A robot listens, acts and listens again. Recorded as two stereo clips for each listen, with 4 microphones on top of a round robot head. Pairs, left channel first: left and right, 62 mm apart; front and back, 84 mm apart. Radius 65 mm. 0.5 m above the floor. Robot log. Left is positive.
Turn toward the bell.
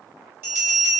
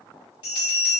note: The bell: 40° right.
cmd yaw -40
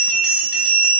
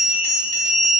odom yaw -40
note: The bell is now 15° right.
cmd yaw -15
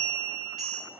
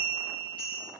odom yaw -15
end: Facing the bell.